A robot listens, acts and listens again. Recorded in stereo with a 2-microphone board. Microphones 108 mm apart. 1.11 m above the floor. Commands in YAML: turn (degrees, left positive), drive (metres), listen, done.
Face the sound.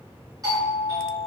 turn: -35
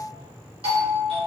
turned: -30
turn: -110
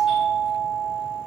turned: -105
done: "Facing the doorbell."